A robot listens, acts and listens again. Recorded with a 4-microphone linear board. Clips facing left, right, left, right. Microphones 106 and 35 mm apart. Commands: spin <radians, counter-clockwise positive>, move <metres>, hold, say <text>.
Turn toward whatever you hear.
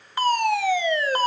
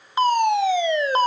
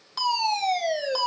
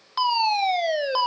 spin -0.35
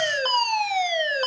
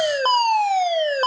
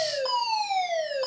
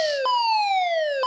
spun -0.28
spin -2.44
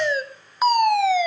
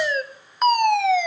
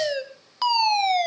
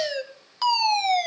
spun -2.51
say Facing the fire alarm.